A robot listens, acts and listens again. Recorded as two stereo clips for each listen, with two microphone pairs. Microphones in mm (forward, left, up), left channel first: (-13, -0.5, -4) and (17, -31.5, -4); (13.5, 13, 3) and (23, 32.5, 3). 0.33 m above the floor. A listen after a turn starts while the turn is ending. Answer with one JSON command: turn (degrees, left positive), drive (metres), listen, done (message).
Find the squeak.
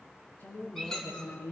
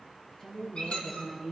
{"turn": -145}
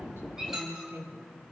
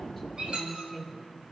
{"turn": 35}
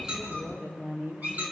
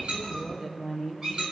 {"done": "Found it: a squeak, straight ahead."}